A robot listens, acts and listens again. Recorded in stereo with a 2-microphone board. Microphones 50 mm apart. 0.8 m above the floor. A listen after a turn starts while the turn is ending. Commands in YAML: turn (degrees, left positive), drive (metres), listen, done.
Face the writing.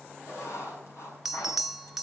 turn: 70
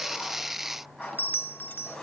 done: "Facing the writing."